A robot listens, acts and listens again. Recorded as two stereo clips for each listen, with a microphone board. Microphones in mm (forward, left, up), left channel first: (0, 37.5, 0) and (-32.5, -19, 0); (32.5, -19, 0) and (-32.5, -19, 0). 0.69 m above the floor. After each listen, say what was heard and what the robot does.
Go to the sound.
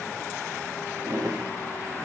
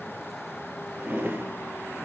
The drawer: 120° right. Turn 120° right.
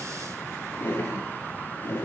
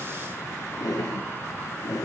The drawer is now 10° left. Turn 10° left.
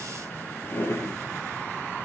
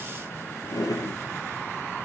Drive 1.0 m forward.
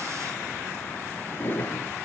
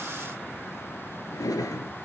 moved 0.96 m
Drive 1.0 m forward.
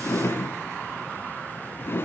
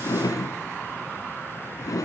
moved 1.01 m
The drawer is now 10° left. Turn 10° left.
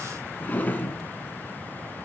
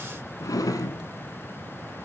Drive 1.0 m forward.
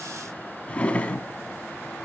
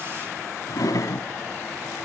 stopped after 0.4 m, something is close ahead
The drawer is now 10° right. Turn 10° right.
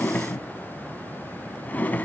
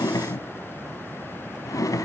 Arrived at the drawer, straight ahead.